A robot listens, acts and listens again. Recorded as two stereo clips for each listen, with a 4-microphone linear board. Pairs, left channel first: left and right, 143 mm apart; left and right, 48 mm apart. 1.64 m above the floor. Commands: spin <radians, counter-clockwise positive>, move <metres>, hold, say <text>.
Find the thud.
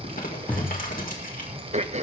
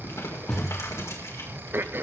spin 0.52
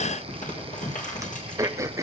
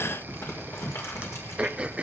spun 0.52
hold
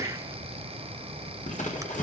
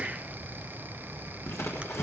say I heard a thud, but can't make it out now. It was about 20° right or 140° left.